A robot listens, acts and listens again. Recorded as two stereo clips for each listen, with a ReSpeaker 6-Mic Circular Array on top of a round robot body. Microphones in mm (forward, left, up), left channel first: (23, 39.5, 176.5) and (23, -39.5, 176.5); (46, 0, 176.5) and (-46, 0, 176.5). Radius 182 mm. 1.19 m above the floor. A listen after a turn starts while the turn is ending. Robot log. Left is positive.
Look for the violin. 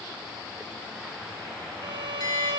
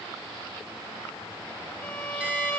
note: The violin: 70° right.
cmd yaw -70
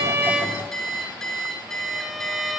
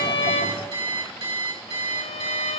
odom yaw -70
end: Found it: a violin, straight ahead, under 1 m away.